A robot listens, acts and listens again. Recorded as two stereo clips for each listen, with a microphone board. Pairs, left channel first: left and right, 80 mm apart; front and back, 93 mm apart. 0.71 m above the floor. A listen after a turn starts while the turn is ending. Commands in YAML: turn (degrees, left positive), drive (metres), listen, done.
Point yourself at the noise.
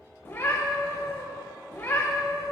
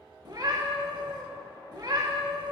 turn: 145
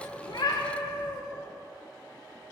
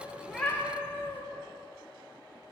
turn: 70
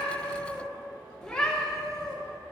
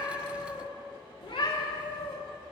turn: 10
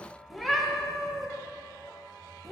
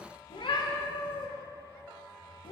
done: "Found it: a cat meowing, straight ahead, under 1 m away."